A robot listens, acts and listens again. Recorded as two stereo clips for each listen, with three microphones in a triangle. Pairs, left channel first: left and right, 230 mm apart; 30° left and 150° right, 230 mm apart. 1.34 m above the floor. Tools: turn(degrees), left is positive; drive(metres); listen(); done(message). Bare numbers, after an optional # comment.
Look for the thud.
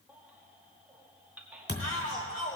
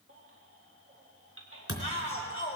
# The thud: 50° left.
turn(50)
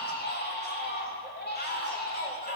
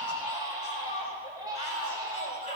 done("I heard a thud from this way, but can't make it out now.")